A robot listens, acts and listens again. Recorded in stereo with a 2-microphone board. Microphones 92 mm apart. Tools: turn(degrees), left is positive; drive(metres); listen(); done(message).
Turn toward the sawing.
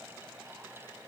listen()
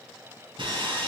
turn(degrees=-55)
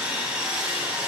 turn(degrees=-10)
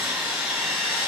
done("Facing the sawing.")